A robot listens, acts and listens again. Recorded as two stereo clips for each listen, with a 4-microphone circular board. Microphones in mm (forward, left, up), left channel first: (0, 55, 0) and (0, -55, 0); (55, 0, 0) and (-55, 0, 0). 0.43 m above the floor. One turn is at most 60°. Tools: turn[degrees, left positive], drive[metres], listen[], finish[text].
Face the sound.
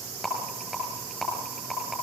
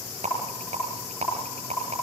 Thought: The rattle: straight behind.
Action: turn[60]
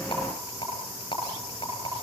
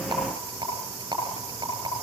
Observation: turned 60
Thought: The rattle is now 130° left.
Action: turn[60]
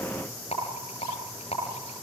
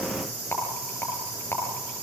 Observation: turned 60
Thought: The rattle is now 70° left.
Action: turn[60]
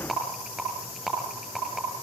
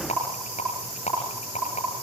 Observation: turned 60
Action: finish[Facing the rattle, over 4 m away.]